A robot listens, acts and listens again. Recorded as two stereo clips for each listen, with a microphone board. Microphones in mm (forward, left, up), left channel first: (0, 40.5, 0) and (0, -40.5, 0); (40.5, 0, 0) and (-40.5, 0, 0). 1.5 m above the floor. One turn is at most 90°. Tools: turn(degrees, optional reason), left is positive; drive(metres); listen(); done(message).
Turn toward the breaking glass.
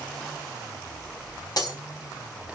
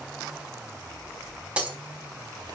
turn(degrees=90, reason="The breaking glass: 105° left.")
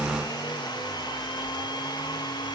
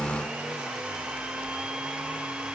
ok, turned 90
turn(degrees=15, reason="Nothing new. It was at 15° left.")
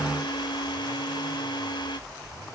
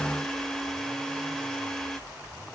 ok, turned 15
done("I heard breaking glass from this way, but can't make it out now.")